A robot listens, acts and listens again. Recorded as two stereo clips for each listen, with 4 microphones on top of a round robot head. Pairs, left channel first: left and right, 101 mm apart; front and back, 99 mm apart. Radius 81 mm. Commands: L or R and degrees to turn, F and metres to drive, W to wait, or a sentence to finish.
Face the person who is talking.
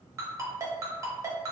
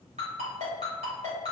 W
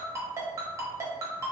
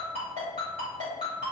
W
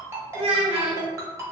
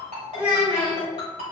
R105
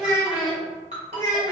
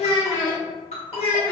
Facing the child speaking, under 1 m away.